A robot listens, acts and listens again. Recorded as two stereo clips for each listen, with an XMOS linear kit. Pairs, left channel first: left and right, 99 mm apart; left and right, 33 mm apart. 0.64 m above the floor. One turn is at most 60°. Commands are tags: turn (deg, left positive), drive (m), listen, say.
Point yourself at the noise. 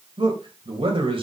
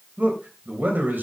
<turn deg="-60"/>
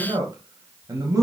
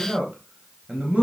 <turn deg="-35"/>
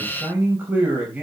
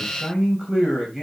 <turn deg="-15"/>
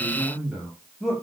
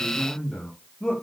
<say>Found it: a man speaking, straight ahead, over 4 m away.</say>